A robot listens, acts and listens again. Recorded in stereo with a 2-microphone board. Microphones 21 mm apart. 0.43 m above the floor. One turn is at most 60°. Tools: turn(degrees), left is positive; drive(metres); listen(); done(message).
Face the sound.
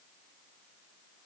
listen()
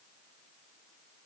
listen()
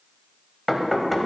turn(degrees=30)
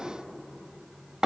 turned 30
turn(degrees=-35)
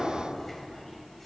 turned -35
turn(degrees=10)
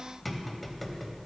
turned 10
done("Facing the knocking.")